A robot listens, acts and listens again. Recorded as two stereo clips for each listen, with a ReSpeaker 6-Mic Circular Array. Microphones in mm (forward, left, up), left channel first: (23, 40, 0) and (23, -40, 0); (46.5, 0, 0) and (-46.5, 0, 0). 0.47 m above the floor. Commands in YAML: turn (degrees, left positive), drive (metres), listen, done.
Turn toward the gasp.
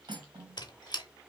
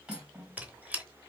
listen: true
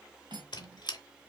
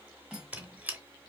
listen: true
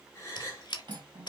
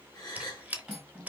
turn: 40
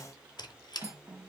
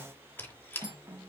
done: "Facing where the gasp came from. I can't hear it now."